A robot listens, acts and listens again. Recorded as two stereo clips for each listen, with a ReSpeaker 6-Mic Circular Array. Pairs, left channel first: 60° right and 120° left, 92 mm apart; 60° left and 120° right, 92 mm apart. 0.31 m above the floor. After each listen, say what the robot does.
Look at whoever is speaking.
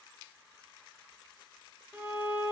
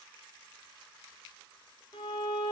Keep listening.
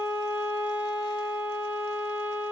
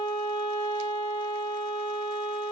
Keep listening.
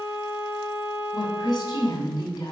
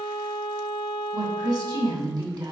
Turn 90° right.
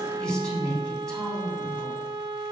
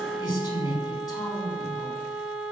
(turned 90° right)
Turn 20° left.
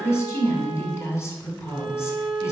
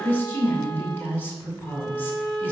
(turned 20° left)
Found it: a woman speaking, straight ahead, 2 to 4 m away.